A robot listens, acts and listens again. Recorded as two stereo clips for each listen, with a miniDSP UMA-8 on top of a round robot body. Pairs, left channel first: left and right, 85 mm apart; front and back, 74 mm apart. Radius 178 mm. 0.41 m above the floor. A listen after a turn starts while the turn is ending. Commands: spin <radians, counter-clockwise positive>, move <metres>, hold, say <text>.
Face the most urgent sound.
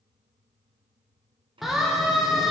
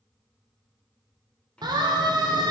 spin 3.14
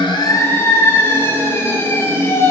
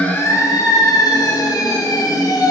spin 0.52
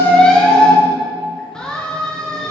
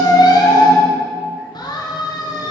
spin 0.17
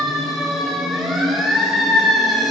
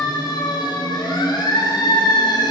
say Facing the siren, 2 to 4 m away.